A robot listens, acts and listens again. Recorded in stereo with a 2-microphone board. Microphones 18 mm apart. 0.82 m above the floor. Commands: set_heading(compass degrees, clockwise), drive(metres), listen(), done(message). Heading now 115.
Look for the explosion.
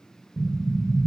set_heading(95)
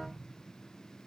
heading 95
listen()
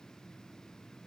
done("I heard an explosion, but can't make it out now. It was about straight ahead or 140° left.")